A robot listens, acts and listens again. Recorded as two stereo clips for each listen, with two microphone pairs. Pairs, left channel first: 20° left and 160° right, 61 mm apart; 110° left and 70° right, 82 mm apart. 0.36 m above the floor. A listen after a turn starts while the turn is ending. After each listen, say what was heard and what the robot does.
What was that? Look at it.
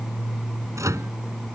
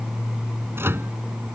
The microwave: 130° right. Turn 130° right.
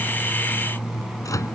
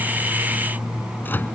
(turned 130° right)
The microwave is now 45° left. Turn 45° left.
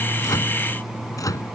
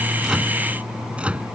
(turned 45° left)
Facing the microwave.